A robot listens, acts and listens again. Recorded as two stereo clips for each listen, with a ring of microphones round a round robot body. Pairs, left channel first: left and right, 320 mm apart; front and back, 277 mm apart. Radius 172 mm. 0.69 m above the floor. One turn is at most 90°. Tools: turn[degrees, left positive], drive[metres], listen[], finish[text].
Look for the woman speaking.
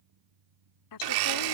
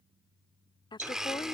Thought: The woman speaking: 75° left.
Action: turn[75]
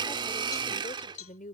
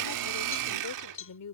Thought: The woman speaking is now 25° left.
Action: turn[25]
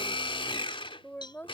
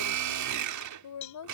Action: finish[Found it: a woman speaking, straight ahead.]